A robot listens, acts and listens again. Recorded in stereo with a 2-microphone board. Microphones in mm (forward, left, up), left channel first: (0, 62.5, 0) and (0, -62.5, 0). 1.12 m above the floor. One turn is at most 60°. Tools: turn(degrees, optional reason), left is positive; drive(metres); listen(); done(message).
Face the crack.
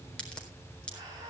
turn(degrees=30)
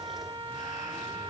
listen()
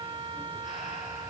done("I heard a crack, but can't make it out now. It was about 20° right or 140° left.")